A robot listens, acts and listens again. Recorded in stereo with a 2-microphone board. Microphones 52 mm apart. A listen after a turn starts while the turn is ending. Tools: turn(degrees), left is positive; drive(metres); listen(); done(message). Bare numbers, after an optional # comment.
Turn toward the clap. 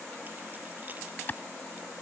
# The clap: about 35° left or 145° left.
turn(35)
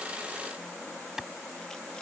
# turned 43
# So it is at 10° right.
turn(-10)
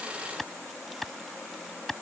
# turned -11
done("Found it: a clap, straight ahead.")